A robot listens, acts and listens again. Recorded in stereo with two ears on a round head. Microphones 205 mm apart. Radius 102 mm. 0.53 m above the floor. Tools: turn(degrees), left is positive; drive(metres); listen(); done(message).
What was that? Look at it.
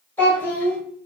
turn(degrees=30)
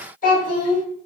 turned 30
turn(degrees=140)
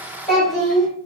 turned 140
done("Found it: a child speaking, straight ahead.")